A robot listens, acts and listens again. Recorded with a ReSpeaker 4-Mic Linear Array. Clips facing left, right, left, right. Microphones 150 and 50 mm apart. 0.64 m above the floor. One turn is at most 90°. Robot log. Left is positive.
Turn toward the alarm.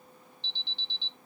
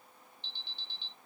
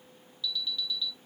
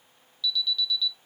note: The alarm: about 20° left or 160° left.
cmd yaw +20
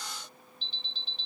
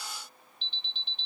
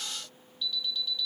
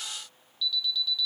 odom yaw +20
note: So it is at 140° left.
cmd yaw +90
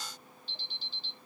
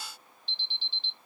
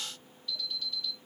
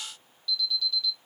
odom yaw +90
note: The alarm is now 45° left.
cmd yaw +45
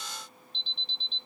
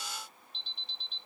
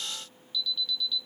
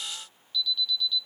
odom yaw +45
end: Facing the alarm.